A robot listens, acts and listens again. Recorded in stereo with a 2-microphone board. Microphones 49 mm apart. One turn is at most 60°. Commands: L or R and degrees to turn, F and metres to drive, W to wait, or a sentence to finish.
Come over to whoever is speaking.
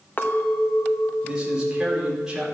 R30
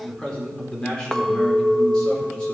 L20
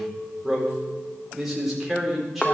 F1.0
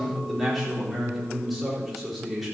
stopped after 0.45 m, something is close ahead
Blocked. The man speaking is further on, straight ahead.